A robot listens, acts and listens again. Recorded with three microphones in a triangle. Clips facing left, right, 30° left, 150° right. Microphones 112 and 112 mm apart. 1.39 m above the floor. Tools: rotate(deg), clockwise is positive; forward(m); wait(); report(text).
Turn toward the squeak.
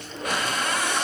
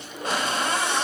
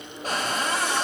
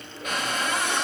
wait()
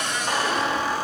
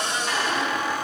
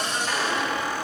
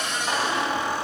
rotate(-145)
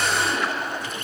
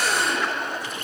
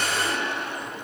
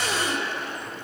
wait()
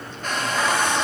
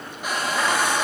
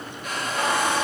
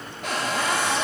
wait()
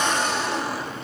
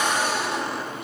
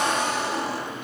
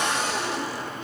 report("Facing the squeak.")